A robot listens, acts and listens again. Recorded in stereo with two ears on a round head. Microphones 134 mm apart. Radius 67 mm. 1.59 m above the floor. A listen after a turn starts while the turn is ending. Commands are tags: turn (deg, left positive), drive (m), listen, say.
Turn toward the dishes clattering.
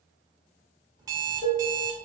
<turn deg="20"/>
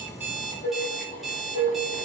<turn deg="135"/>
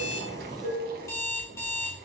<turn deg="-25"/>
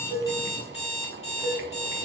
<listen/>
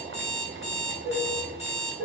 <say>Found it: dishes clattering, straight ahead.</say>